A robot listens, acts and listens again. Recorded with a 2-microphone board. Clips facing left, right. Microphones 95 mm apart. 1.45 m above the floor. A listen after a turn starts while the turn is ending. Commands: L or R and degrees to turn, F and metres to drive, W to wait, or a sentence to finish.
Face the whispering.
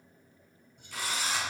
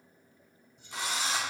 L60
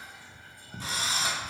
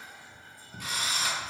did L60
L65
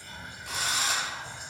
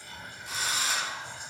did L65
Found it: whispering, straight ahead.